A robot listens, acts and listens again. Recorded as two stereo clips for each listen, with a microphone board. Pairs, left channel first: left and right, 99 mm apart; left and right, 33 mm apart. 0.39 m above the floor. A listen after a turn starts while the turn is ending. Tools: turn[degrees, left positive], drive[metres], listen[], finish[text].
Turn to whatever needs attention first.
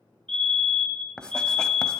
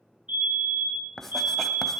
Thought: The fire alarm: about 55° right or 125° right.
Action: turn[-55]
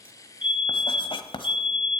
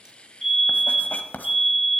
Thought: So it is at 15° right.
Action: turn[-15]
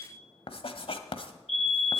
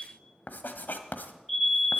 Action: finish[Facing the fire alarm, 2 to 4 m away.]